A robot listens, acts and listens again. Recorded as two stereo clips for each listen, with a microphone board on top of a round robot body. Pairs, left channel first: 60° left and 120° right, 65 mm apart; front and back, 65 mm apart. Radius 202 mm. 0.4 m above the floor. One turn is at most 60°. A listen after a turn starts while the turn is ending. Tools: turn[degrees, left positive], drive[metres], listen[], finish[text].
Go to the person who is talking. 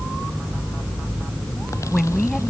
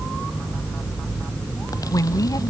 Thought: The woman speaking: 25° right.
Action: turn[-25]
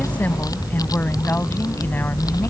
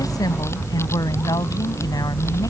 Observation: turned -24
Action: drive[1.0]
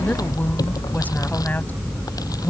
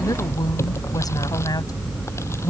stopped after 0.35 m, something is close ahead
Action: finish[Something is in my way. I am facing the woman speaking but have not reached it.]